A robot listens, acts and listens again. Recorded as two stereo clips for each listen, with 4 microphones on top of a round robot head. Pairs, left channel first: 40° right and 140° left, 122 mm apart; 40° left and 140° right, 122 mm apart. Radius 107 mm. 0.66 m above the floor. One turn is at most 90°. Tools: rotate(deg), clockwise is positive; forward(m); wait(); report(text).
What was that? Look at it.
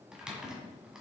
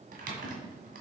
rotate(90)
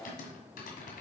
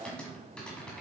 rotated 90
rotate(45)
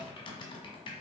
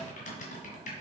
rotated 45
rotate(-15)
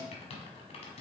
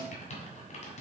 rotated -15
report("Facing the typing on a keyboard, 1 to 2 m away.")